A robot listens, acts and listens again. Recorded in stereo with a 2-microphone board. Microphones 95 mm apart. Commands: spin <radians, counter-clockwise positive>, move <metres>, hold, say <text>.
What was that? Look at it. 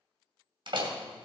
spin -1.05
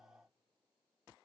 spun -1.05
hold
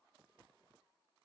say I heard a door slam, but can't make it out now. It was about straight ahead or 60° right.